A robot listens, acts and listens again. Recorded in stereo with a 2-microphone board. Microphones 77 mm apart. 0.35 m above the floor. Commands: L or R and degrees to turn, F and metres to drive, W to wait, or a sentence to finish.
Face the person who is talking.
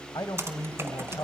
L60
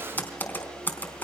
W
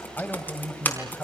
L30
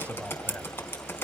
L25
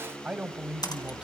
R15
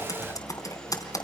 W
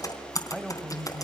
Found it: a man speaking, straight ahead, 1 to 2 m away.